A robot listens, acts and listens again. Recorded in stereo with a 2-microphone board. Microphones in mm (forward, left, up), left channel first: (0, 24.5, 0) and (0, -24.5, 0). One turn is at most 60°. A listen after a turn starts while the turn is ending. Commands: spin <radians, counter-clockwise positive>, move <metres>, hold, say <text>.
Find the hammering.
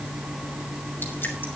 hold
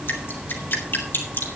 hold
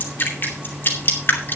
say I can't make out hammering, only dripping.